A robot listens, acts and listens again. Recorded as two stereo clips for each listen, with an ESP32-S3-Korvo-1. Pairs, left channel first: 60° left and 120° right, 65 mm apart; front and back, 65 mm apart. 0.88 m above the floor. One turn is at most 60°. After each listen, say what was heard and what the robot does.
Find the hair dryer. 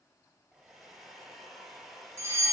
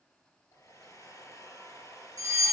The hair dryer: 35° right. Turn 35° right.
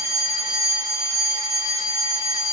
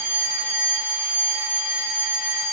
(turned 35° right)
Keep listening.
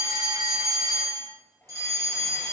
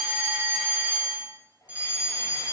Facing the hair dryer, 2 to 4 m away.